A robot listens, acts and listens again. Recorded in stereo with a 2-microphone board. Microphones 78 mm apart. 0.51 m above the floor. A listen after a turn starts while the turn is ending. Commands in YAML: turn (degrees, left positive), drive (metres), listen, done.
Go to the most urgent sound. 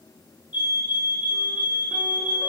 turn: -25
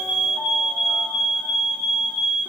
drive: 1.0
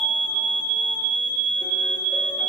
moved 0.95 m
drive: 1.0
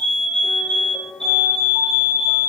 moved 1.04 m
turn: 10
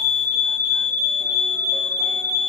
drive: 1.0
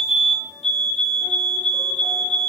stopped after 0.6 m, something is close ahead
done: "I am next to the fire alarm."